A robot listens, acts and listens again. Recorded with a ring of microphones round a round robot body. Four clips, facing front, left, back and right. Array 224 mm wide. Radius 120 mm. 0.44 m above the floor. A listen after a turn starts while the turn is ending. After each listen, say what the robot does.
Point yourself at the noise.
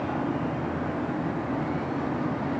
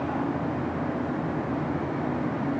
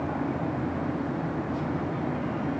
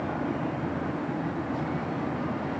Keep listening.
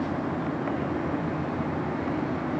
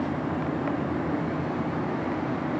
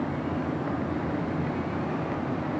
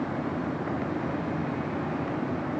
Keep listening.
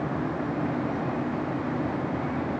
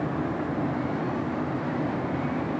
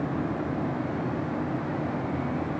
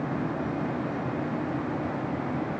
I can't make out anything.